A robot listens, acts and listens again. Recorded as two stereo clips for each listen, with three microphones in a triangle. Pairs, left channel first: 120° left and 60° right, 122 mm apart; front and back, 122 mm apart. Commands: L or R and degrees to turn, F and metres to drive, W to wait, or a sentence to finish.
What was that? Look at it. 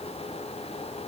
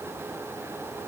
W
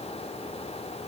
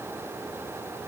W
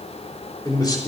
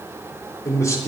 L65
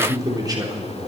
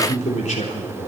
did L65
Found it: a man speaking, straight ahead.